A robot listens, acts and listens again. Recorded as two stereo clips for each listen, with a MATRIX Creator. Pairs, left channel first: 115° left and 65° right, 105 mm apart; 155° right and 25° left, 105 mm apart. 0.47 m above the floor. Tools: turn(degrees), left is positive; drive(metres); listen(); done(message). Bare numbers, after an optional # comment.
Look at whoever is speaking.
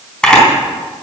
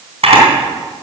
listen()
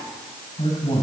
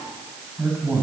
# The man speaking: 95° left.
turn(95)
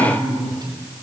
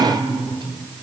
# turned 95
# The man speaking is now 20° right.
turn(-20)
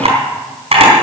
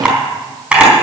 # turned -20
listen()
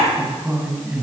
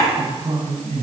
done("Found it: a man speaking, straight ahead, 2 to 4 m away.")